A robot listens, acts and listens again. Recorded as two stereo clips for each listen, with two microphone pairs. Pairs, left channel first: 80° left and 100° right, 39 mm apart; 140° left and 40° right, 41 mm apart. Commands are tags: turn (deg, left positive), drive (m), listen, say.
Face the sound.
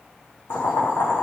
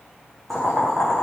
<turn deg="55"/>
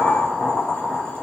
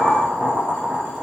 <say>Found it: boiling, straight ahead, over 4 m away.</say>